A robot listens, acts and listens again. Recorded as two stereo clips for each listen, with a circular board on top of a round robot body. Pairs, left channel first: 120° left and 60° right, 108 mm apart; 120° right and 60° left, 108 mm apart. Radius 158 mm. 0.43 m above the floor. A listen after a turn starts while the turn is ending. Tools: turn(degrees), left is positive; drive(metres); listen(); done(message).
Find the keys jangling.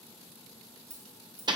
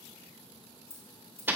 turn(degrees=-85)
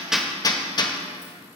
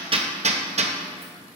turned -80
listen()
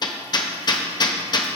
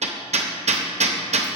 listen()
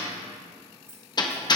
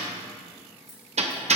done("Facing the keys jangling, over 4 m away.")